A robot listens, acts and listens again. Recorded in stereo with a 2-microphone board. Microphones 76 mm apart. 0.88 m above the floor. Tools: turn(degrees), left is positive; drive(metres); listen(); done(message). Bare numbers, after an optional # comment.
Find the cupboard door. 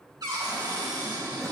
# The cupboard door: about 60° right or 120° right.
turn(-60)
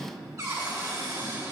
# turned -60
# So it is at 50° right.
turn(-50)
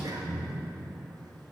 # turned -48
listen()
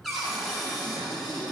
done("Found it: a cupboard door, straight ahead.")